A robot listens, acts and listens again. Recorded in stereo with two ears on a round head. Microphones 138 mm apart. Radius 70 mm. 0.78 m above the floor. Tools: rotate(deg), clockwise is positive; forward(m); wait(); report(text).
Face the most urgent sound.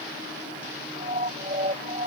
rotate(40)
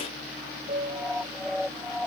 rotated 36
report("Facing the siren.")